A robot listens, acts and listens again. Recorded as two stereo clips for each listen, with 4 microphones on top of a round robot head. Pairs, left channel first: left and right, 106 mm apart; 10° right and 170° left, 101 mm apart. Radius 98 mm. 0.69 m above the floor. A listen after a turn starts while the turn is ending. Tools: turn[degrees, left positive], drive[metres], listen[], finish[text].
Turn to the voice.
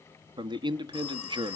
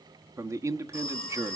Thought: The man speaking: 130° right.
Action: turn[-130]
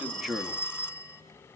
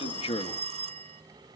Action: listen[]
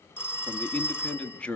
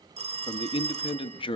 Thought: The man speaking is now 10° left.
Action: turn[10]
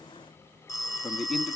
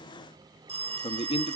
Action: finish[Found it: a man speaking, straight ahead, 1 to 2 m away.]